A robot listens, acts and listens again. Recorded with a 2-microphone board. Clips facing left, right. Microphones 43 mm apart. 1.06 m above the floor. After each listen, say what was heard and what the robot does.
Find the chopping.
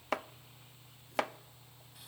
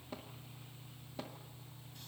Turn 90° left.
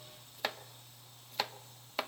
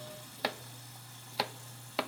Found it: chopping, straight ahead.